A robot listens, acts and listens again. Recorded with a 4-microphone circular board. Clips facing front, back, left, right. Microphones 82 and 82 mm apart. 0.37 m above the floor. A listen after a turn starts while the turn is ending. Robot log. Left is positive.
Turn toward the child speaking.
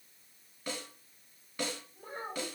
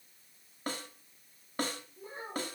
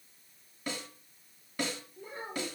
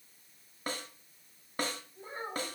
note: The child speaking: 35° right.
cmd yaw -35
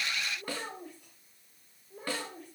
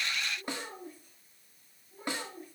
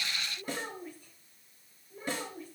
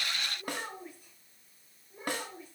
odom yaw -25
note: The child speaking is now 15° right.
cmd yaw -15
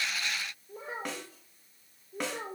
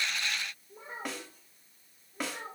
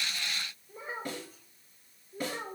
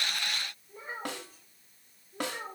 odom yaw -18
end: Found it: a child speaking, straight ahead.